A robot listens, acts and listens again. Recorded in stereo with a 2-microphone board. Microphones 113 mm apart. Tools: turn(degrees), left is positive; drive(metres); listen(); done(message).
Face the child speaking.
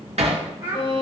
turn(degrees=-20)
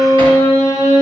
listen()
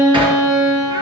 listen()
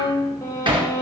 done("I heard a child speaking, but can't make it out now. It was about straight ahead or 140° right.")